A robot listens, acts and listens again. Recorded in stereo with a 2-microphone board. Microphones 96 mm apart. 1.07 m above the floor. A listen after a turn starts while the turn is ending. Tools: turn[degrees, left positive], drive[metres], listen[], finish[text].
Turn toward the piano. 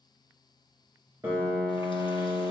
Thought: The piano: about 25° right or 155° right.
Action: turn[-25]
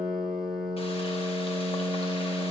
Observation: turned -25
Action: finish[Facing the piano, 2 to 4 m away.]